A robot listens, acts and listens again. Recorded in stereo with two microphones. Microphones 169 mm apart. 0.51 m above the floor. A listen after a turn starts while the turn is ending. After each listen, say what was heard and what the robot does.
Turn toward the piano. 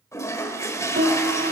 Turn 90° right.
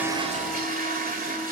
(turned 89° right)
Keep listening.
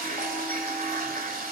Keep listening.
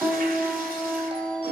Facing the piano, 2 to 4 m away.